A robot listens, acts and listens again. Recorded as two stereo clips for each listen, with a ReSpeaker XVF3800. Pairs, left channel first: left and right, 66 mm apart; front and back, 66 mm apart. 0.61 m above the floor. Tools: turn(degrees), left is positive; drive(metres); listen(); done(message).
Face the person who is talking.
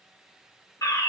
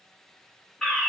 listen()
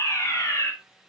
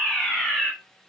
listen()
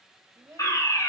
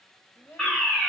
turn(degrees=-50)
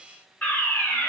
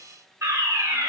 listen()
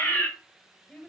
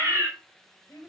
turn(degrees=25)
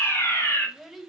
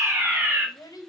done("Facing the child speaking, 1 to 2 m away.")